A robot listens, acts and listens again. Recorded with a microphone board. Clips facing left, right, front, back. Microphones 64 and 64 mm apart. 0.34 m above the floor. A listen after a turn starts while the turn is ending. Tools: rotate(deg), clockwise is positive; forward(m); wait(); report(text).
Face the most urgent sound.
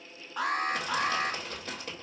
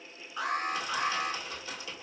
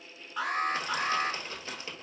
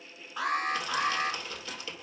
rotate(-90)
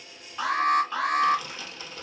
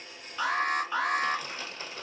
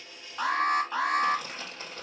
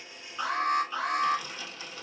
report("Found it: an alarm, straight ahead, 1 to 2 m away.")